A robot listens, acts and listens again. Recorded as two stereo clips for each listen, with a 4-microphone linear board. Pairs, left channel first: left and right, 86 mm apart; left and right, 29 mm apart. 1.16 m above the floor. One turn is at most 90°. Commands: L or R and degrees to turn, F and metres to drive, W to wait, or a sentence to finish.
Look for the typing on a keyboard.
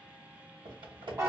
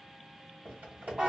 R90
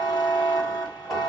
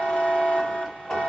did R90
W
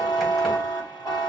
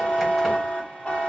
W
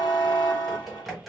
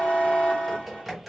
Found it: typing on a keyboard, straight ahead.